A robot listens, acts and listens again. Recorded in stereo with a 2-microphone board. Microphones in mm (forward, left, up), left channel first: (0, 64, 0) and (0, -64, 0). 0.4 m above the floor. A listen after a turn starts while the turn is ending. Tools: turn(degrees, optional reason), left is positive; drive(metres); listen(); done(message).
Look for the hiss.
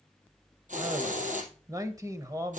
turn(degrees=-90)
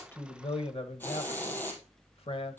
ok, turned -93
turn(degrees=15, reason="So it is at 15° left.")
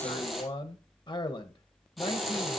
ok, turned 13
done("Facing the hiss, 2 to 4 m away.")